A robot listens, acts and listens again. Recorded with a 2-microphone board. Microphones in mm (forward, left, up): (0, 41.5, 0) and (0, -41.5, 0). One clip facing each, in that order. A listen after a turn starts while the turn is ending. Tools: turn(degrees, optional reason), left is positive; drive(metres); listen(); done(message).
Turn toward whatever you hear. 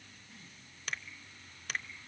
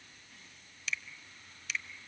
turn(degrees=45, reason="The finger snap: about 45° left or 135° left.")
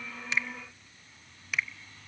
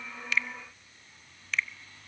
turn(degrees=15, reason="So it is at 15° left.")
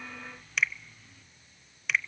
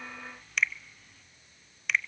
done("Facing the finger snap.")